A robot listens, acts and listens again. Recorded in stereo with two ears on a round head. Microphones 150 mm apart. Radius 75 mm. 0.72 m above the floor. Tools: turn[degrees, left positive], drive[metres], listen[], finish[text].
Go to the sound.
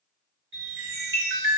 Action: turn[-90]
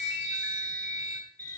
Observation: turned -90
Thought: So it is at 10° left.
Action: turn[10]
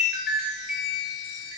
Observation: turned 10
Action: drive[1.0]
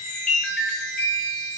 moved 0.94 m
Action: drive[1.0]
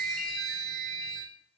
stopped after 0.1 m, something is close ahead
Action: finish[I am next to the chime.]